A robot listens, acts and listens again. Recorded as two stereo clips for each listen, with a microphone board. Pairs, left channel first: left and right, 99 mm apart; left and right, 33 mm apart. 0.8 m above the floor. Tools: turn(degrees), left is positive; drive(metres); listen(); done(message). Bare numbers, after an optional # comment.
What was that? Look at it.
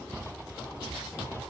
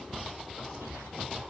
listen()
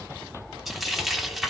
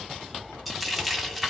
turn(30)
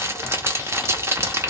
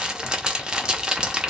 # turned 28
# So it is at 30° right.
turn(-30)
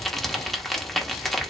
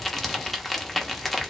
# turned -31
done("Found it: frying, straight ahead, under 1 m away.")